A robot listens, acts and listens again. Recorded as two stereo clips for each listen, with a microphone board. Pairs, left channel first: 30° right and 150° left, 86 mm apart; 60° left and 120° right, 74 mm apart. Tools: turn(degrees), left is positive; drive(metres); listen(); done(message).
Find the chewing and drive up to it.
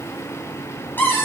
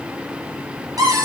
listen()
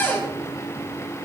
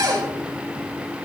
listen()
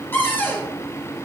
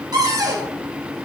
done("I can't make out chewing, only a cupboard door.")